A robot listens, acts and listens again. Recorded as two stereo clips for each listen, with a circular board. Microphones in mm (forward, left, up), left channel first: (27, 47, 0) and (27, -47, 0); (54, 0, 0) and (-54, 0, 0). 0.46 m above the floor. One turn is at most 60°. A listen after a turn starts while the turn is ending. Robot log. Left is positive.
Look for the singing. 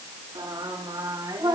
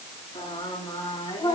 note: The singing: 55° right.
cmd yaw -55
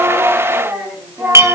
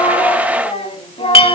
note: The singing is now 30° right.
cmd yaw -30
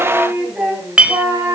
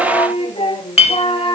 note: The singing is now 35° right.
cmd yaw -35
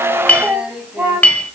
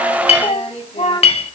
note: The singing is now 20° right.
cmd yaw -20
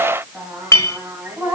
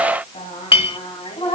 note: The singing is now 20° right.
cmd yaw -20
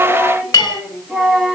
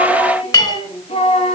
end: Found it: singing, straight ahead, 2 to 4 m away.